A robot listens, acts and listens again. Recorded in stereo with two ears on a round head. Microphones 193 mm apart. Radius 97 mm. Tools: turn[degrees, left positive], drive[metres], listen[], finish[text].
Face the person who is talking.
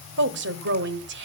Thought: The woman speaking: about 55° right or 125° right.
Action: turn[-55]
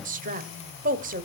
Thought: So it is at 45° right.
Action: turn[-45]
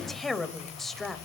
Action: finish[Found it: a woman speaking, straight ahead.]